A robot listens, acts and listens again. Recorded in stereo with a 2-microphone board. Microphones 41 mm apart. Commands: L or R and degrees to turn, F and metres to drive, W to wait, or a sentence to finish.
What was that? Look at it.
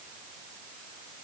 W
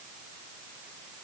W
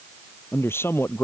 L90
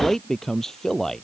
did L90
L10
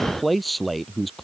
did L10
Facing the man speaking.